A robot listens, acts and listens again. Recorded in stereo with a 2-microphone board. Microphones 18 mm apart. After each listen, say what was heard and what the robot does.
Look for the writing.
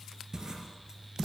The writing: about 30° right or 150° right. Turn 30° right.
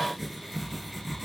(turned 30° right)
Facing the writing, 2 to 4 m away.